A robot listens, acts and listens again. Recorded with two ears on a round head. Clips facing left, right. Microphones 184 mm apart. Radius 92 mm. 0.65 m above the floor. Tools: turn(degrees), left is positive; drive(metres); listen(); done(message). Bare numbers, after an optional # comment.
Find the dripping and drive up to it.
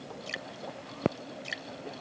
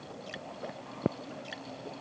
# The dripping: about 30° left or 150° left.
turn(30)
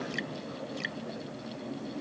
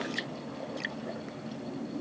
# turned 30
listen()
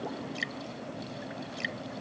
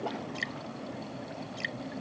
drive(1.0)
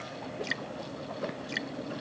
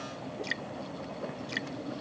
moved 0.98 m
drive(1.0)
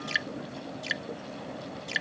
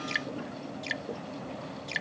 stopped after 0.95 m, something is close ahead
# The dripping is now 10° left.
turn(10)
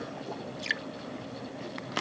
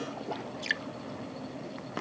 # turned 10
done("Arrived at the dripping, straight ahead.")